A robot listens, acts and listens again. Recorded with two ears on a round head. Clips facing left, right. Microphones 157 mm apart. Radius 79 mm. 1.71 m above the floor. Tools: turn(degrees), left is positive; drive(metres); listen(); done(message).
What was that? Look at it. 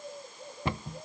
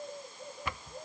turn(degrees=25)
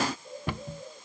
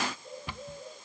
turn(degrees=125)
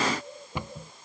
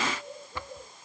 turn(degrees=15)
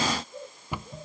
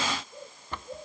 turn(degrees=10)
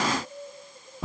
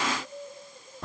done("Found it: a cupboard door, straight ahead.")